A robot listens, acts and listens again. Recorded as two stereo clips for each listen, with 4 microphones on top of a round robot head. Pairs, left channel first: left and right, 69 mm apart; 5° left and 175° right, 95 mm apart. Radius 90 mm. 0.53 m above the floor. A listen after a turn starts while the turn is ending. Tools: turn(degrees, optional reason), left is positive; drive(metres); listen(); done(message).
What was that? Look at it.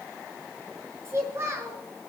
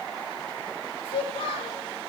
turn(degrees=-35, reason="The child speaking: 35° right.")
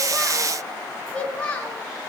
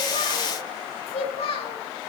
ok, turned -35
turn(degrees=15, reason="The child speaking is now 15° left.")
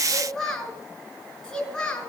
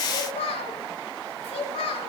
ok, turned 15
turn(degrees=10, reason="The child speaking is now 10° left.")
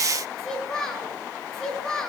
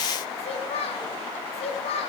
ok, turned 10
done("Facing the child speaking.")